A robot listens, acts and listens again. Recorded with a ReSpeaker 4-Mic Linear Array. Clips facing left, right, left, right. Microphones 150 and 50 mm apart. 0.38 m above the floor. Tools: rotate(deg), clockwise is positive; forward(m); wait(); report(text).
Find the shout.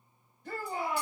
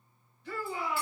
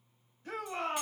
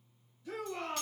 rotate(-50)
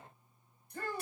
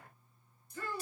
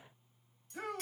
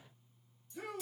rotate(-70)
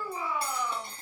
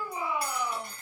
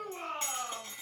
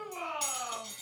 rotate(10)
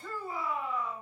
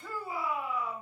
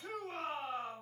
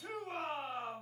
report("Facing the shout.")